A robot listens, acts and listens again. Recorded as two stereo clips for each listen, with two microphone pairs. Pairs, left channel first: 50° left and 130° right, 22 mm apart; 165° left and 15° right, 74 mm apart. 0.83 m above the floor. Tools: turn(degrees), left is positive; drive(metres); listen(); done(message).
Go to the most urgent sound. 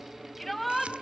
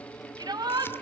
turn(degrees=-35)
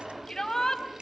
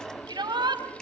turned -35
turn(degrees=-10)
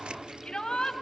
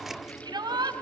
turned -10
drive(metres=1.0)
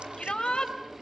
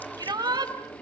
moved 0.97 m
turn(degrees=10)
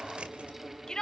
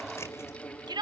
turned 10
drive(metres=1.0)
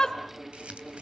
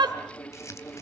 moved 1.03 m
drive(metres=1.0)
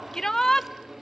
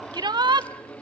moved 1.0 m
turn(degrees=-10)
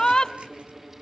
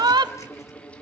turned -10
drive(metres=1.0)
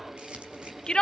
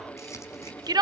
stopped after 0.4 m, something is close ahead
done("Arrived at the shout, straight ahead.")